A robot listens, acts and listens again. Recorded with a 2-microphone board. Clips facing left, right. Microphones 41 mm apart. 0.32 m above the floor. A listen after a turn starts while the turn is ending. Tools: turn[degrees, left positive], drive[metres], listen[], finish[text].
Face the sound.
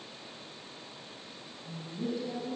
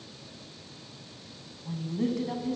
Thought: The woman speaking: about 65° right or 115° right.
Action: turn[-65]
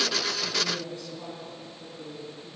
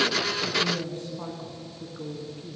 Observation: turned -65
Thought: So it is at 40° right.
Action: turn[-40]
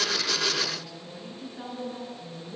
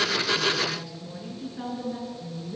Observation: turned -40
Action: finish[Found it: a woman speaking, straight ahead.]